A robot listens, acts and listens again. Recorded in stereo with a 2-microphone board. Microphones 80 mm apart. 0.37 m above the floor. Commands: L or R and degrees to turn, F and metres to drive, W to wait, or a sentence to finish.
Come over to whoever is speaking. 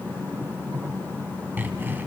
W
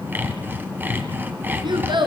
R75
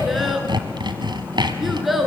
F1.0
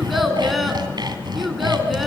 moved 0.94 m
F1.0
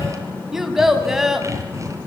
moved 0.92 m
F1.0
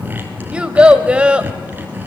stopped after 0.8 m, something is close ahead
R15
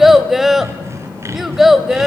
Arrived at the child speaking, straight ahead.